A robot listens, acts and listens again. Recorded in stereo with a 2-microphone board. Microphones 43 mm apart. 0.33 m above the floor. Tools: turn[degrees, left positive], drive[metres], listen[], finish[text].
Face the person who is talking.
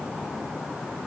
Action: listen[]
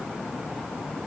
Action: listen[]
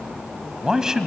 Action: turn[-30]
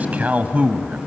Thought: So it is at 135° right.
Action: turn[-135]
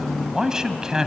Thought: The man speaking is now 15° right.
Action: turn[-15]
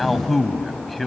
Action: finish[Facing the man speaking, 1 to 2 m away.]